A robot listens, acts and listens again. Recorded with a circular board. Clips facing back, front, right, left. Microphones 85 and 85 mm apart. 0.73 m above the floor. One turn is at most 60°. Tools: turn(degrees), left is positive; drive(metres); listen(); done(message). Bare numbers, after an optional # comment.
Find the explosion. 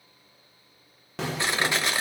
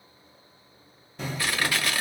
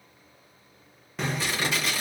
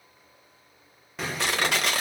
# The explosion: straight behind.
turn(60)
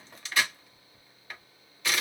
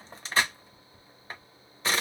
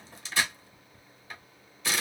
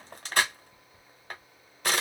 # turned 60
# Nothing new. It was at 120° left.
turn(60)
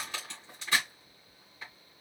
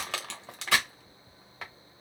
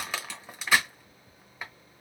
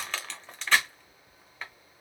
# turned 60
# Nothing new. It was at 60° left.
turn(60)
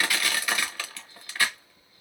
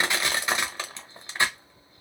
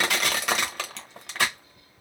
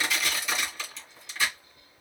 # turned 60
done("I heard an explosion from this way, but can't make it out now.")